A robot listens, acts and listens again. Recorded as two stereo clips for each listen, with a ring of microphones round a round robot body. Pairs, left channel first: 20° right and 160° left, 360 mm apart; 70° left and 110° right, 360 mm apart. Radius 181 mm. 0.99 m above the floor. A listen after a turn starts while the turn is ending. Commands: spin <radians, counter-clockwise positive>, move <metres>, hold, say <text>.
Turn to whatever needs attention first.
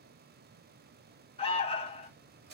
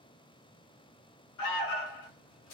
spin 0.87
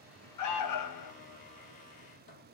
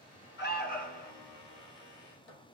say Found it: an alarm, straight ahead, 1 to 2 m away.